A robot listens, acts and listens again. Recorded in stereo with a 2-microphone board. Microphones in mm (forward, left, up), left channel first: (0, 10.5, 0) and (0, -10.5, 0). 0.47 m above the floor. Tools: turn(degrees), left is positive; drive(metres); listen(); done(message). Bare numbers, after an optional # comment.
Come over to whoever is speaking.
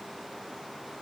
listen()
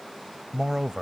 # The man speaking: about 30° right or 150° right.
turn(-30)
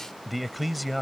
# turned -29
drive(1.0)
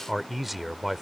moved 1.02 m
# The man speaking is now 10° right.
turn(-10)
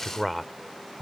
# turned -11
drive(1.0)
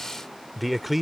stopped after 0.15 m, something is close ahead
done("I am next to the man speaking.")